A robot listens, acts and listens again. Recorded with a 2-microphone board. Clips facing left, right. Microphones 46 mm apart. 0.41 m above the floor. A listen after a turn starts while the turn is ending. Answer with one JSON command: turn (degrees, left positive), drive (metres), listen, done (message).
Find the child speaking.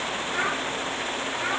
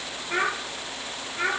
{"turn": -90}
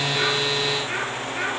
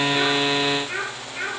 {"done": "Found it: a child speaking, straight ahead, over 4 m away."}